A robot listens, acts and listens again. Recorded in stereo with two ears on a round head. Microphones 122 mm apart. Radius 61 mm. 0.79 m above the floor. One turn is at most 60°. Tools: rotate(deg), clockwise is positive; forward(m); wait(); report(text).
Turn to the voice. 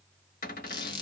wait()
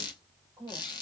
rotate(30)
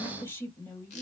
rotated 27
rotate(-20)
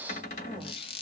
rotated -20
wait()
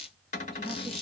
wait()
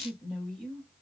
report("Found it: a woman speaking, straight ahead, 1 to 2 m away.")